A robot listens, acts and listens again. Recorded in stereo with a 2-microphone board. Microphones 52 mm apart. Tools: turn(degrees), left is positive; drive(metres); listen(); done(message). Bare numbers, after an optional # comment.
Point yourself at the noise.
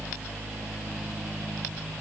listen()
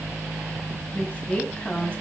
# The woman speaking: about 25° left or 155° left.
turn(25)
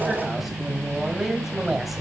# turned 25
done("Facing the woman speaking, 2 to 4 m away.")